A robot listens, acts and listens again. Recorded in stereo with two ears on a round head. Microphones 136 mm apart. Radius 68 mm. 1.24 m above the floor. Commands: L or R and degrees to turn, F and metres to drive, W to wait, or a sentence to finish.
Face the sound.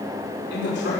L70
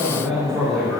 Facing the man speaking, 2 to 4 m away.